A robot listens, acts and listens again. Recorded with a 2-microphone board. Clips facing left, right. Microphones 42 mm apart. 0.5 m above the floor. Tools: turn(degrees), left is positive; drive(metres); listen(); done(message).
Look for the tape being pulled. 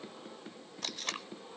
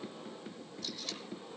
turn(degrees=60)
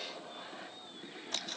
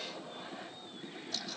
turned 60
turn(degrees=55)
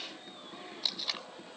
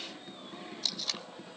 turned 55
turn(degrees=15)
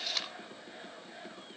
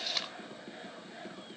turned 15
done("Found it: tape being pulled, straight ahead, under 1 m away.")